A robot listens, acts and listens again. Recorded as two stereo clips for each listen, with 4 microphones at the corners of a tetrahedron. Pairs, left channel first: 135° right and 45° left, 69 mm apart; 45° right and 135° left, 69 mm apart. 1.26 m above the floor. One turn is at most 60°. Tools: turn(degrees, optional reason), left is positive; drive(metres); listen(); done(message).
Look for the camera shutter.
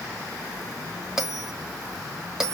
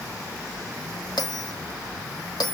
listen()
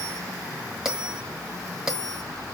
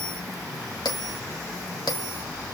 listen()
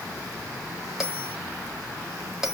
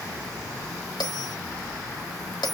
done("I can't make out a camera shutter, only a bell.")